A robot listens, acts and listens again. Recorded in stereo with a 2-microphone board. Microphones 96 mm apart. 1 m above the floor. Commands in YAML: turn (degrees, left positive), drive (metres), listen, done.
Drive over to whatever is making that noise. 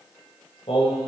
turn: 90
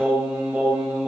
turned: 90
turn: -15
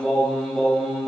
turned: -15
drive: 1.0
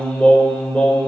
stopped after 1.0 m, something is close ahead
turn: 15
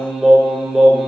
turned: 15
done: "Blocked. The singing is further on, straight ahead."